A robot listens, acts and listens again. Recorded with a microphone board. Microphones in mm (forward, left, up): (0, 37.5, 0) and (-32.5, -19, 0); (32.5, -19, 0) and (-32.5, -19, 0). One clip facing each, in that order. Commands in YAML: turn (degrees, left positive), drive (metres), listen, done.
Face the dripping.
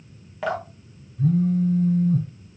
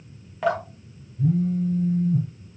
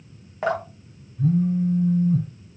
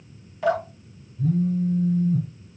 turn: -35
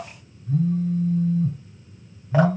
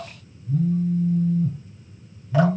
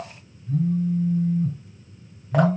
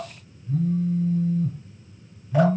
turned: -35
listen: true
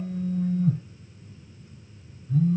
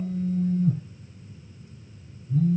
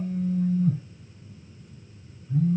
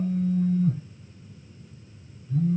listen: true
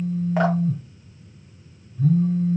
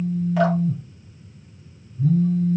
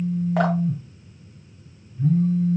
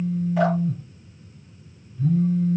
done: "I heard dripping from this way, but can't make it out now."